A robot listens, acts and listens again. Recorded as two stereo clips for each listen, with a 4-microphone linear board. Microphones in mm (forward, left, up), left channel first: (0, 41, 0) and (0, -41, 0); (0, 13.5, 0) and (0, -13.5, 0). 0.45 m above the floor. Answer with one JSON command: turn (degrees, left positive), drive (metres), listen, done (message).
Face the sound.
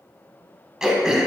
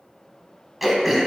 {"turn": -30}
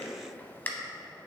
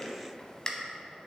{"turn": 25}
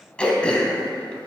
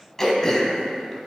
{"turn": 15}
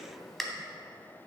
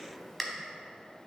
{"done": "Found it: throat clearing, straight ahead."}